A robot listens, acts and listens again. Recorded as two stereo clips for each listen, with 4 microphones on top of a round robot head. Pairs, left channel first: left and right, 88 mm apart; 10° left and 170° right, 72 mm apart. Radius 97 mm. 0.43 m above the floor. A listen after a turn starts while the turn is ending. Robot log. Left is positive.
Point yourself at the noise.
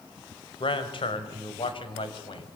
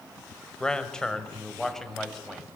note: The man speaking: 95° left.
cmd yaw +95
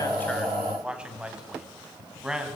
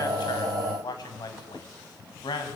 end: Found it: a man speaking, straight ahead.